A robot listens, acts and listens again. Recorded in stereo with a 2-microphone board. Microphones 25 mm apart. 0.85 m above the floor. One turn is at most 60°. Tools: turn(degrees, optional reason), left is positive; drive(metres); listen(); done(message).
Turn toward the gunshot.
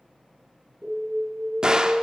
turn(degrees=-30, reason="The gunshot: about 30° right or 150° right.")
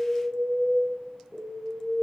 listen()
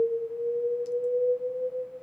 done("I heard a gunshot, but can't make it out now. It was about straight ahead or 120° right.")